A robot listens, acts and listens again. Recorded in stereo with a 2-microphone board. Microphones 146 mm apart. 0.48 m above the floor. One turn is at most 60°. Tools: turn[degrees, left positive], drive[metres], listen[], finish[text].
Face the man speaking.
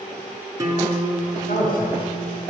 Action: turn[60]
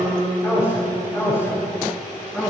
Thought: So it is at 20° left.
Action: turn[20]
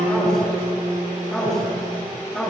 Action: finish[Found it: a man speaking, straight ahead, over 4 m away.]